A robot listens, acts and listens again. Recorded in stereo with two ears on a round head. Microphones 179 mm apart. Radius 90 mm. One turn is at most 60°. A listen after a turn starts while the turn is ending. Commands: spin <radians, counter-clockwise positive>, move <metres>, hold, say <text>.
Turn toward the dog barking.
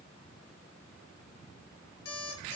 hold
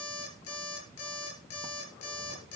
hold
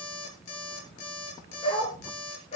spin 0.52
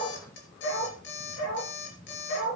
spin 1.05
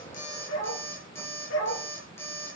spin 1.05
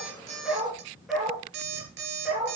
say Facing the dog barking.